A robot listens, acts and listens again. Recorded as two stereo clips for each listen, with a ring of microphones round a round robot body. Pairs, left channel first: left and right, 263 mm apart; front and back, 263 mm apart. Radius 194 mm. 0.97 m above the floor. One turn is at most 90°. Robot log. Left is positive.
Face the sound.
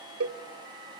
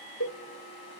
note: The cowbell: 55° right.
cmd yaw -55
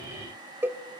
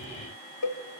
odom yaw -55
end: Found it: a cowbell, straight ahead.